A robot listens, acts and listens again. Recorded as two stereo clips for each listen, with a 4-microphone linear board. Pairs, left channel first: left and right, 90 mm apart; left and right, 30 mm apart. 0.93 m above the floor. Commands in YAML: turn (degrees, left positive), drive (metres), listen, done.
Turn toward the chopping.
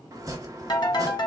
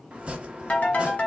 turn: -40
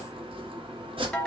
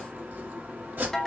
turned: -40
turn: -95
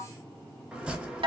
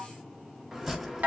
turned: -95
turn: -10
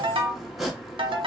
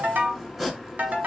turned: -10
done: "Found it: chopping, straight ahead."